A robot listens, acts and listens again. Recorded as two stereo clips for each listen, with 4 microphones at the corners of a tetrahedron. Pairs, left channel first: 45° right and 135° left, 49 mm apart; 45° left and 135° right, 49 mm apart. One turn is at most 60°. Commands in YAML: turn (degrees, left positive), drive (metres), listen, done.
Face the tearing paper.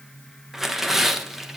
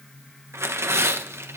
turn: -60
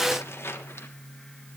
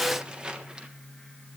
turn: -60
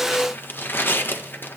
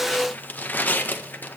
done: "Found it: tearing paper, straight ahead, 1 to 2 m away."